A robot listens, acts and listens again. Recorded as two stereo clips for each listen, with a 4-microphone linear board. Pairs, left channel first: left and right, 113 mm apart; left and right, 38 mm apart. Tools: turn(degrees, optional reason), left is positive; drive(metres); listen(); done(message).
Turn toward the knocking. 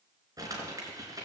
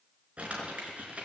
listen()
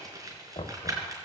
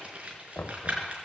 turn(degrees=65, reason="The knocking: about 65° left or 115° left.")
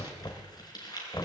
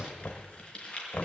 turn(degrees=40, reason="So it is at 40° left.")
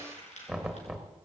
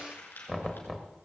done("Found it: knocking, straight ahead.")